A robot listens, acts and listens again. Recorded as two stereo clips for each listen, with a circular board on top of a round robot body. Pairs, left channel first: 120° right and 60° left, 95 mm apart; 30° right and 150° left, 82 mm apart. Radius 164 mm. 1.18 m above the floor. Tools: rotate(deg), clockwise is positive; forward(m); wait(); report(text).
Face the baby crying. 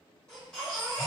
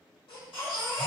rotate(45)
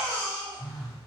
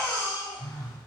rotate(10)
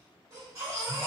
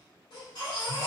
report("Found it: a baby crying, straight ahead.")